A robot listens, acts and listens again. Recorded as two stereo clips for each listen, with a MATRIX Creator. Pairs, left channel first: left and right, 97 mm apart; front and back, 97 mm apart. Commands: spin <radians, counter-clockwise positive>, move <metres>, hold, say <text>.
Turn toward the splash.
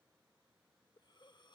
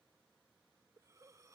hold
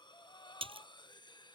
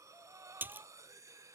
spin -1.92
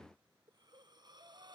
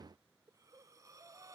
say I heard a splash from this way, but can't make it out now.